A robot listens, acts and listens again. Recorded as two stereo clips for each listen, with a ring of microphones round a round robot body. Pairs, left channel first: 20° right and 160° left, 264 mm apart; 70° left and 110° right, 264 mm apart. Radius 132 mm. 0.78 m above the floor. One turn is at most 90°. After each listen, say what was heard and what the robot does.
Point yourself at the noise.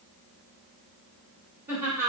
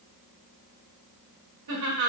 The laughter: 120° right. Turn 90° right.
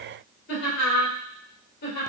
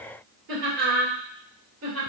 The laughter is now 75° right. Turn 75° right.
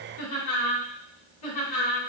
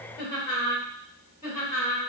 The laughter is now 15° right. Turn 15° right.
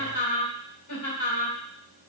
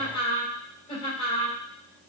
Facing the laughter.